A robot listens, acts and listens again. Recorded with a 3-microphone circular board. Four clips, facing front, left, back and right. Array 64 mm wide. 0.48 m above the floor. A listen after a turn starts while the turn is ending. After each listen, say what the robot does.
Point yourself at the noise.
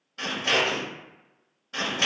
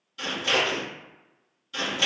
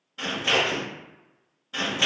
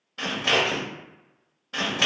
Turn 85° right.
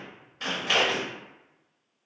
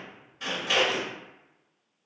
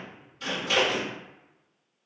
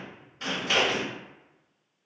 Facing the scissors, 1 to 2 m away.